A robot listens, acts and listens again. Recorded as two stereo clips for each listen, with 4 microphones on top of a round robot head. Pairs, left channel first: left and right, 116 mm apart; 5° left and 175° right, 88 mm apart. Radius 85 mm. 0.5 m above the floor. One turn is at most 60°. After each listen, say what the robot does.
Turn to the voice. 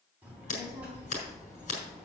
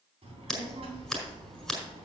Turn 60° right.
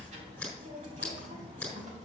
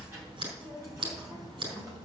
Turn 60° right.
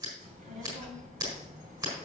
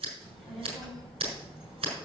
Turn 60° right.
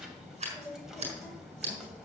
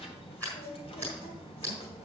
Found it: a child speaking, straight ahead, 2 to 4 m away.